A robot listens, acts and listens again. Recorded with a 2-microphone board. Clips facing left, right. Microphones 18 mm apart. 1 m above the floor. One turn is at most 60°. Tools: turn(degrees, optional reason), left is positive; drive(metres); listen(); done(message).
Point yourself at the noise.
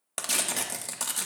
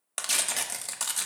turn(degrees=-30)
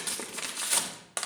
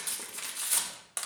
turn(degrees=25, reason="So it is at 25° left.")
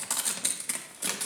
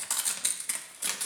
done("Found it: tearing paper, straight ahead, 1 to 2 m away.")